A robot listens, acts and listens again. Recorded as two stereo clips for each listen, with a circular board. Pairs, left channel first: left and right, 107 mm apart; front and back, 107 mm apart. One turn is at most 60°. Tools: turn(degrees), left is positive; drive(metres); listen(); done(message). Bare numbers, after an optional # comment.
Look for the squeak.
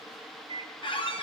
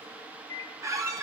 # The squeak: 120° left.
turn(60)
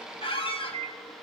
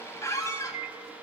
# The squeak is now 60° left.
turn(60)
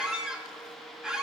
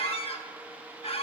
done("Facing the squeak.")